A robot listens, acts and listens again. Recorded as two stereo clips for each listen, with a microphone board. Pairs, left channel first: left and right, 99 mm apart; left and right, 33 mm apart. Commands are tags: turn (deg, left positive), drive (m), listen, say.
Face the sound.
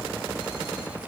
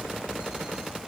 <listen/>
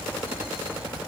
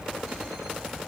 <listen/>
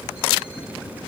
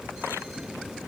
<say>I can't make out anything.</say>